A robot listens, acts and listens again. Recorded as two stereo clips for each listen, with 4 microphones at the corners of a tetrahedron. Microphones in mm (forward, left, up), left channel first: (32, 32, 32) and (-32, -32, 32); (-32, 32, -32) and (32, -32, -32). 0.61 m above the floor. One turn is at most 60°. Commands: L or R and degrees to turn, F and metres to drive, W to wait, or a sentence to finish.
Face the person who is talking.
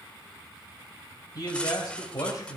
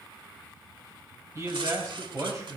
Facing the man speaking, 2 to 4 m away.